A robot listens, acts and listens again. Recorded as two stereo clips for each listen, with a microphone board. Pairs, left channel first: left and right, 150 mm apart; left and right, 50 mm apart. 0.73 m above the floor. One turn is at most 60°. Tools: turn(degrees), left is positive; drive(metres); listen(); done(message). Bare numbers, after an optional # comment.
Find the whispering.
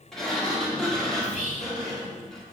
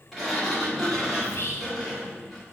# The whispering: about 50° left or 130° left.
turn(50)
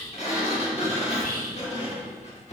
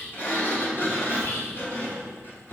# So it is at 75° left.
turn(60)
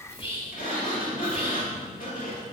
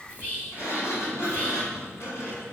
# The whispering is now 40° left.
turn(40)
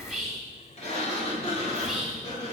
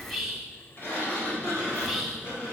done("Found it: whispering, straight ahead, 1 to 2 m away.")